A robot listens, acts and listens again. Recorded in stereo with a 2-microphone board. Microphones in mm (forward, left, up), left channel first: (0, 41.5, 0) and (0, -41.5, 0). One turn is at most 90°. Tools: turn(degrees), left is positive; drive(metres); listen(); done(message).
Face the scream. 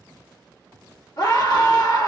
turn(degrees=60)
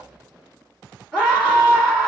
turn(degrees=10)
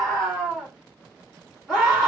done("Found it: a scream, straight ahead, 1 to 2 m away.")